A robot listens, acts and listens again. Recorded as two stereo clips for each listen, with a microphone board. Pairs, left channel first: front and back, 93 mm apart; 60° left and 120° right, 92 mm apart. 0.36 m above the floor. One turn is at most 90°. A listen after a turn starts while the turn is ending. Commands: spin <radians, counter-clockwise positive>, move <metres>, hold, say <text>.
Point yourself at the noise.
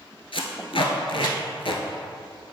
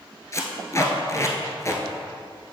say Facing the tape being pulled, under 1 m away.